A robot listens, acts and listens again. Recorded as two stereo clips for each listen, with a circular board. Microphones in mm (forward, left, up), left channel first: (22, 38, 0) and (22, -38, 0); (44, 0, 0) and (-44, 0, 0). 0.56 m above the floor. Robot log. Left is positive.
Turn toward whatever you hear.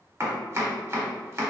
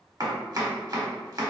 note: The chopping: 140° right.
cmd yaw -140
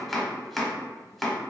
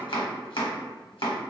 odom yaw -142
end: Facing the chopping.